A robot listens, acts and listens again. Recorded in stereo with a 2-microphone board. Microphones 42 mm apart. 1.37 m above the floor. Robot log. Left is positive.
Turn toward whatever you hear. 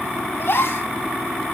note: The gasp: about 65° left or 115° left.
cmd yaw +65
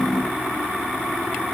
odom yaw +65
cmd idle
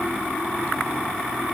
end: I heard a gasp, but can't make it out now. It was about straight ahead or 50° left.